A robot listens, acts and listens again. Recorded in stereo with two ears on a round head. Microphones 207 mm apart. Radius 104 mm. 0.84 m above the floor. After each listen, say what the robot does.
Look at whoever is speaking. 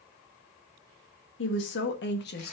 Turn 45° left.
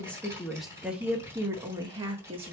Turn 25° right.
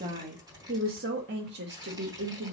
Turn 50° right.
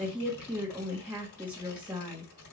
Found it: a woman speaking, straight ahead, 1 to 2 m away.